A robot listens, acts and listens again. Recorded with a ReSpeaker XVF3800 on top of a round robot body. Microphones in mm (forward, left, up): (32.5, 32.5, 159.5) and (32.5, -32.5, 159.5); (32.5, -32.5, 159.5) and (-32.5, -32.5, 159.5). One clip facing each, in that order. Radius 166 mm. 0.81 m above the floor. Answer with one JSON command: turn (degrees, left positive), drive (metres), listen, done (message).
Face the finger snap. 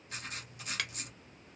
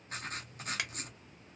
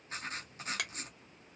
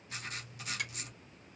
{"turn": -15}
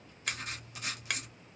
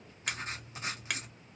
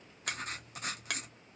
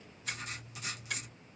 {"done": "Facing the finger snap."}